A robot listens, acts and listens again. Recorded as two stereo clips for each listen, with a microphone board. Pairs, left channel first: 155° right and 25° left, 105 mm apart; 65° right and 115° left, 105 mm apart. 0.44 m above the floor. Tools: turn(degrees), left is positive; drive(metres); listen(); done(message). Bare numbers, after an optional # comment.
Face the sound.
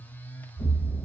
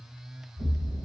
# The explosion: 120° left.
turn(120)
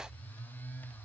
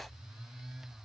done("Facing where the explosion came from. I can't hear it now.")